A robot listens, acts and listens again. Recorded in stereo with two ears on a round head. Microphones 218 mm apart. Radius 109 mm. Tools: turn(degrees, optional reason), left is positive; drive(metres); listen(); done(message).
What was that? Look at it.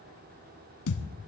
turn(degrees=70, reason="The thud: about 70° left or 110° left.")
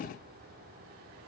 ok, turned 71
listen()
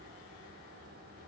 done("I heard a thud, but can't make it out now. It was about 5° right or 40° left.")